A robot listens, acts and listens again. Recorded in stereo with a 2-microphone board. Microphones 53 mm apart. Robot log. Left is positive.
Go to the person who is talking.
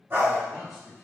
cmd yaw -30
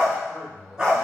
note: So it is at 25° left.
cmd yaw +25
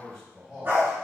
cmd fwd 1.0
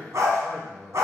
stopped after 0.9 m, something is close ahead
note: The man speaking is now 15° left.
cmd yaw +15
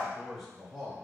end: I am next to the man speaking.